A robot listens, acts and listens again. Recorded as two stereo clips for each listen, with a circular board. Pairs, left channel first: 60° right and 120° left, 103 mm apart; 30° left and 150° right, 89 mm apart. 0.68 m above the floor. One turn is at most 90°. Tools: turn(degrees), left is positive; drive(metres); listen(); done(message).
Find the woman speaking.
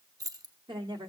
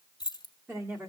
turn(degrees=90)
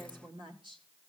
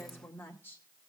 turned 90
turn(degrees=90)
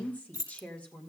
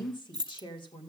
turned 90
turn(degrees=20)
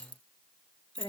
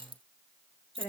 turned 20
done("Found it: a woman speaking, straight ahead.")